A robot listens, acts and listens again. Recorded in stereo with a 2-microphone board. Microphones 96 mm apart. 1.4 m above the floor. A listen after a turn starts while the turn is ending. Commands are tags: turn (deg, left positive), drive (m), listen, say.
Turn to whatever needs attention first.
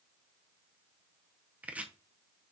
<listen/>
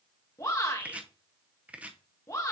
<turn deg="35"/>
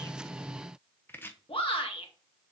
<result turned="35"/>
<turn deg="110"/>
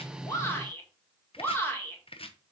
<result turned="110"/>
<turn deg="25"/>
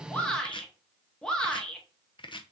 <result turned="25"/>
<turn deg="10"/>
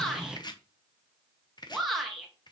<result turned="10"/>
<say>Facing the shout.</say>